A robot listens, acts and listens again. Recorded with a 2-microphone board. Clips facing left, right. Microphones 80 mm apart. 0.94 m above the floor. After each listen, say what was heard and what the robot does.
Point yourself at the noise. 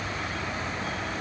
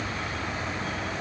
Keep listening.
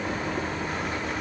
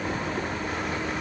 Keep listening.
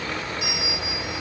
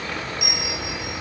The bell: about 70° right or 110° right. Turn 70° right.
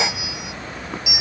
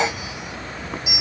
So it is at 35° right. Turn 35° right.
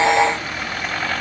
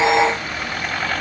Keep listening.
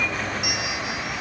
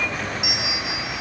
Found it: a bell, straight ahead, 2 to 4 m away.